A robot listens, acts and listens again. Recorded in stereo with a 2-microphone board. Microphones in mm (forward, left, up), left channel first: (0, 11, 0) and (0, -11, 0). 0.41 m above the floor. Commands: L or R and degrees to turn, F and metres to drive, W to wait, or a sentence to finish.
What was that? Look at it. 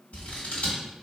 L70
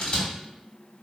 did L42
L45
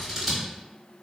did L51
Facing the scissors, 1 to 2 m away.